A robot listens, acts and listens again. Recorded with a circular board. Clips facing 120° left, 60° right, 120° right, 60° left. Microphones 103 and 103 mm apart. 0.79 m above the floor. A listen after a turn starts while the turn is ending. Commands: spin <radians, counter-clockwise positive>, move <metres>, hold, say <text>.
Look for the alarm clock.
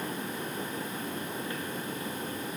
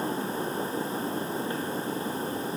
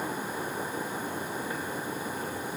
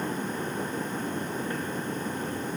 hold
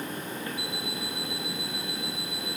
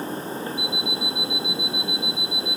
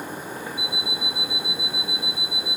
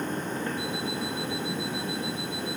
spin 0.17
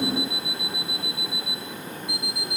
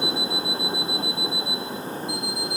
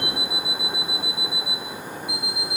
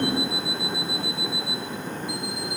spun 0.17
say Facing the alarm clock.